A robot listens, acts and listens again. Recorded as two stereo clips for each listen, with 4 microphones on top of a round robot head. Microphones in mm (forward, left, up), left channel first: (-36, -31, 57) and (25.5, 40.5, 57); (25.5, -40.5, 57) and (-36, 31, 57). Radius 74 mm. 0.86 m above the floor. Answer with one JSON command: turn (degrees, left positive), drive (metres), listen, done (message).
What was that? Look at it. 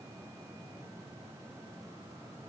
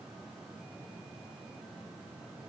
{"listen": true}
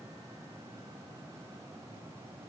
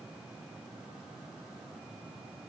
{"listen": true}
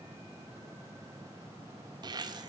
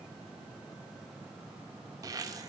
{"turn": 85}
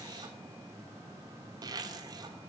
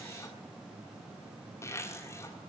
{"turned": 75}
{"done": "Found it: a zipper, straight ahead, 1 to 2 m away."}